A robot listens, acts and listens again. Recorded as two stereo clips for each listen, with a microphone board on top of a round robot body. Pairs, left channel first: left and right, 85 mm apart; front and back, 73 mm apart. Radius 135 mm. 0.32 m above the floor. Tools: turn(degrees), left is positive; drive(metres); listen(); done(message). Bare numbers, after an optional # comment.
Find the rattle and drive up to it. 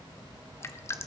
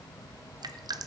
listen()
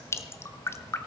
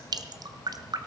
listen()
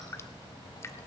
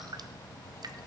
done("I can't make out a rattle to turn to.")